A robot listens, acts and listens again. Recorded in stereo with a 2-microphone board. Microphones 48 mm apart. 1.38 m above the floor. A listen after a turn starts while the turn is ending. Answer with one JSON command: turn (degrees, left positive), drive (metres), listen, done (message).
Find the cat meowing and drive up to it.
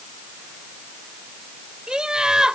{"listen": true}
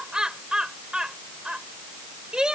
{"listen": true}
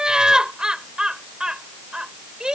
{"done": "I can't make out a cat meowing, only laughter."}